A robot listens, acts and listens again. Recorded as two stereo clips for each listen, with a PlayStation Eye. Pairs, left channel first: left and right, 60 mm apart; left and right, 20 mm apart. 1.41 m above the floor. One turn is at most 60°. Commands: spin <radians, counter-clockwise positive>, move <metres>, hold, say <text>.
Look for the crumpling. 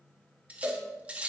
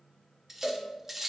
hold
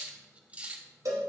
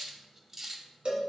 hold
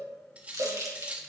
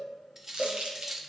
spin -1.05
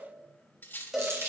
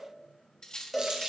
spin -0.87
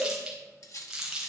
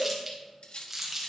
spin -0.17
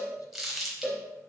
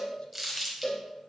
say Found it: crumpling, straight ahead.